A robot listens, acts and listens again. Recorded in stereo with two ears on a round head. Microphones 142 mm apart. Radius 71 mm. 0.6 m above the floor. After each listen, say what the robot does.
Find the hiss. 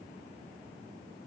Keep listening.
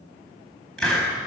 Turn 30° left.
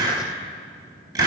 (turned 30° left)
Turn 25° right.
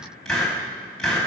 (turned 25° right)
Found it: a hiss, straight ahead.